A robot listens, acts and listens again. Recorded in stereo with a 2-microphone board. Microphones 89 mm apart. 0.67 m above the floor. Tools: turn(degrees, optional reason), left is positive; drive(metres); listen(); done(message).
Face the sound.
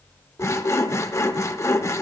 turn(degrees=35, reason="The sawing: about 35° left or 145° left.")
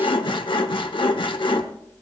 turn(degrees=115, reason="So it is at 115° left.")
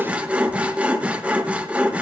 turn(degrees=-15, reason="The sawing is now 15° right.")
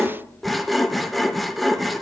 done("Facing the sawing, under 1 m away.")